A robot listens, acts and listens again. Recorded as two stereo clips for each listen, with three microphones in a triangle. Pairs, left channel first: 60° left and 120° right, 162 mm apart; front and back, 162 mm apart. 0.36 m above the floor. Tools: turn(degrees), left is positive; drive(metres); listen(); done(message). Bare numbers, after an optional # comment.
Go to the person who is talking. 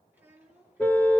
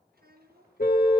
# The child speaking: 160° left.
turn(160)
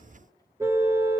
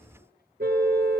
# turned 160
listen()
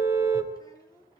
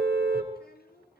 drive(1.0)
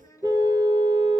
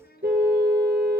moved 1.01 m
# The child speaking is now 10° right.
turn(-10)
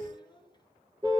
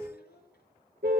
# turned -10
drive(1.0)
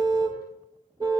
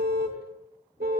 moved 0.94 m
listen()
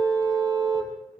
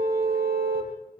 listen()
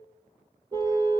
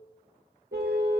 done("I heard a child speaking from this way, but can't make it out now. I did not reach it.")